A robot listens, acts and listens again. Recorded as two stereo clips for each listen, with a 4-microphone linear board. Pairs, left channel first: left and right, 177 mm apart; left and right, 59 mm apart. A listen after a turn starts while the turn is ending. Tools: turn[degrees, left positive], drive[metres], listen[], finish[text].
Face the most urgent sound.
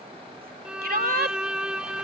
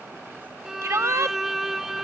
Thought: The shout: about 60° right or 120° right.
Action: turn[-60]
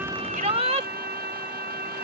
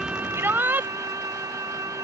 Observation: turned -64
Thought: So it is at 40° right.
Action: turn[-40]
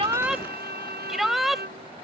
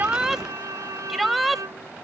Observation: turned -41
Action: finish[Facing the shout.]